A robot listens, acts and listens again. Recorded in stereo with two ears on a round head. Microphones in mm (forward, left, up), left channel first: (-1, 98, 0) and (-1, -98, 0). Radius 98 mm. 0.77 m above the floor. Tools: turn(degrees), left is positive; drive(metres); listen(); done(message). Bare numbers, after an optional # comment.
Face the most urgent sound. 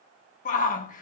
# The shout: about 35° left or 145° left.
turn(35)
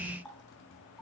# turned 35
listen()
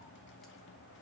listen()
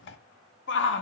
# So it is at 100° left.
turn(100)
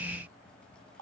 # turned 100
listen()
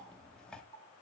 listen()
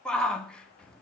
done("Facing the shout.")